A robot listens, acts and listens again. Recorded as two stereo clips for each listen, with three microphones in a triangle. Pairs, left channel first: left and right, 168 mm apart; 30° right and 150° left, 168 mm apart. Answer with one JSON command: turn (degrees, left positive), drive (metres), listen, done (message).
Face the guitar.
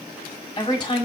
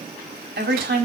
{"listen": true}
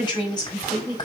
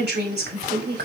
{"listen": true}
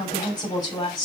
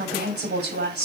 {"done": "I can't make out a guitar to turn to."}